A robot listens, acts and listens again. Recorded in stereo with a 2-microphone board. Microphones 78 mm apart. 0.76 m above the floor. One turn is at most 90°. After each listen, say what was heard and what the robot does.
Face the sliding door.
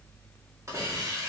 Keep listening.
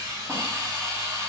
Keep listening.
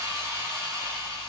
I can't make out a sliding door to turn to.